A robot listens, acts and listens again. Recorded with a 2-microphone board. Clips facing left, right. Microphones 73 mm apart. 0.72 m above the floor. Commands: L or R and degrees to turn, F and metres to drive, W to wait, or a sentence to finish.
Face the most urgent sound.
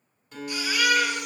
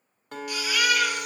L30
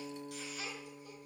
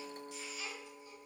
L115
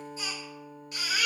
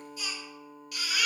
L30
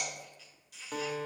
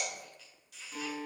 W
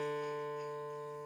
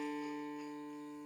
W
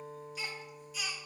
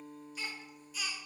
Found it: a baby crying, straight ahead.